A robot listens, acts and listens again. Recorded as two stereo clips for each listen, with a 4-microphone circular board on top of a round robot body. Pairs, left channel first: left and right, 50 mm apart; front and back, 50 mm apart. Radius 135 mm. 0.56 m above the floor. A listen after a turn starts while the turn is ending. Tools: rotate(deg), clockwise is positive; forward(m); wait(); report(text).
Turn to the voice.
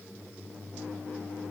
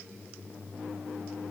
wait()
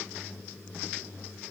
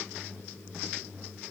wait()
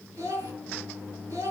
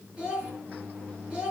rotate(110)
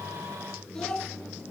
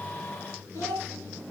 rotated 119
rotate(-10)
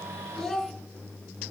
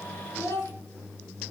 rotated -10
report("Found it: a child speaking, straight ahead, 2 to 4 m away.")